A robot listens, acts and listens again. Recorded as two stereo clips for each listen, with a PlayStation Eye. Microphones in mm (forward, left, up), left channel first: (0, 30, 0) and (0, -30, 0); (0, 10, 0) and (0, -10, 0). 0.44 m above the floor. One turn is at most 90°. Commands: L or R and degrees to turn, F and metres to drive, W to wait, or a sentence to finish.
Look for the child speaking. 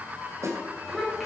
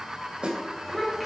L30
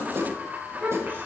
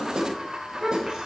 R35
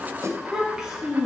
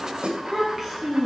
R15
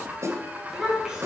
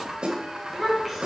R15
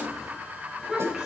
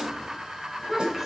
R10
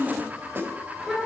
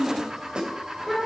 Found it: a child speaking, straight ahead.